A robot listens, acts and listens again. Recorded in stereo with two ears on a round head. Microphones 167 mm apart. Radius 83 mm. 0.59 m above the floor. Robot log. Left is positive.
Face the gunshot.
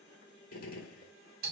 note: The gunshot: about 50° left or 130° left.
cmd yaw +50
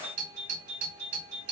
cmd idle
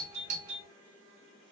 end: I heard a gunshot, but can't make it out now. It was about straight ahead or 80° left.